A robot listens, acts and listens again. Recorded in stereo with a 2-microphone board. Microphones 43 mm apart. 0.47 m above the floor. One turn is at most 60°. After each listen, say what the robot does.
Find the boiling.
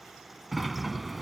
Keep listening.
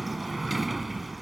Keep listening.
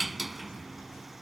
I can't make out boiling, only a sliding door.